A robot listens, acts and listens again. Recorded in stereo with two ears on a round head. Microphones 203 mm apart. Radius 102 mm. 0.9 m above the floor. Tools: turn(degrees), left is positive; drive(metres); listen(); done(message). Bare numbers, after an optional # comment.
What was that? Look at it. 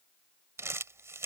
turn(-30)
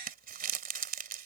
# So it is at 140° right.
turn(-140)
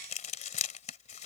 # The crumpling is now 30° left.
turn(30)
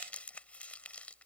done("Facing the crumpling.")